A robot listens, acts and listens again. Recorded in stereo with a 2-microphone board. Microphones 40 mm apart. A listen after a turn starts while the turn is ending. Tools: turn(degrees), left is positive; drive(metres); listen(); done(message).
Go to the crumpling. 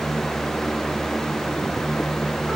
listen()
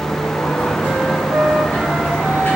listen()
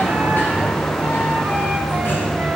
done("I can't make out crumpling to turn to.")